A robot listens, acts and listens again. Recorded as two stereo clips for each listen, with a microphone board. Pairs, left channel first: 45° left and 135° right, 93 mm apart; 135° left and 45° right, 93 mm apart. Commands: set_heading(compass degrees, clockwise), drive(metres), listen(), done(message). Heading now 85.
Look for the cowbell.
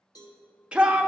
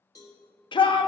set_heading(0)
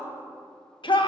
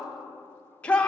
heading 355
listen()
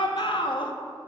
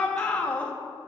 listen()
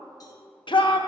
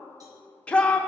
done("I heard a cowbell from this way, but can't make it out now.")